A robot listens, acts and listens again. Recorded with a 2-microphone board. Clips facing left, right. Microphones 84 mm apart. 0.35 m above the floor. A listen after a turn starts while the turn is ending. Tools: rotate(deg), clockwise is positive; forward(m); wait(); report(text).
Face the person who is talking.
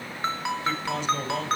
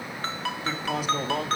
rotate(-30)
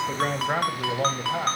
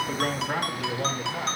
rotate(-130)
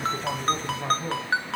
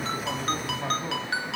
report("Facing the man speaking.")